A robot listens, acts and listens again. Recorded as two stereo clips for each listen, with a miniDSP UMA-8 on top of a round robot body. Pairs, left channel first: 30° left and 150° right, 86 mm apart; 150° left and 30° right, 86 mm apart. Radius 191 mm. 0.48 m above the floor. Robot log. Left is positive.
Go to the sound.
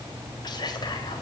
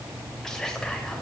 note: The whispering: 65° left.
cmd yaw +65
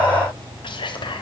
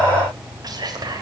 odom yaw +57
note: The whispering is now 10° left.
cmd yaw +10
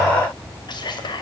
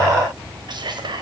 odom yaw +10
cmd fwd 1.0
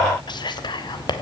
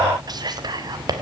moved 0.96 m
cmd fwd 1.0
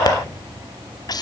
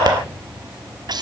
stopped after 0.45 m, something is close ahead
end: Arrived at the whispering, straight ahead.